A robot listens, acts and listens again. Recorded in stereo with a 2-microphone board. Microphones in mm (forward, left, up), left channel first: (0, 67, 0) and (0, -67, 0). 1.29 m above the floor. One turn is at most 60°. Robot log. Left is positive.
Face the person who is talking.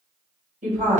cmd yaw -60
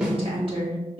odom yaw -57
note: So it is at 40° right.
cmd yaw -40
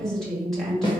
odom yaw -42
end: Facing the woman speaking, 1 to 2 m away.